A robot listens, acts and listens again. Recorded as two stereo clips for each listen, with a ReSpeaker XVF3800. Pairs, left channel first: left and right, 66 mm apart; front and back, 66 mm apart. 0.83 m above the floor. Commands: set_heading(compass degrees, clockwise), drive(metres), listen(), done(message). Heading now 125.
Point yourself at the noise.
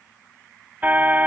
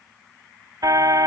set_heading(275)
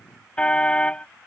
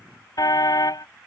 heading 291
set_heading(276)
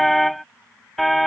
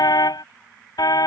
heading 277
done("Facing the car horn.")